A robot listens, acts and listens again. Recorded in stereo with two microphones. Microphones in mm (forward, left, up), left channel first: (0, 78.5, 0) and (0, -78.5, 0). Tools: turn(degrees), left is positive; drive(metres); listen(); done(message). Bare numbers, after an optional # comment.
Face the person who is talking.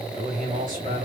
# The man speaking: about 60° right or 120° right.
turn(-60)
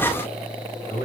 # So it is at 25° right.
turn(-25)
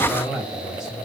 done("Facing the man speaking.")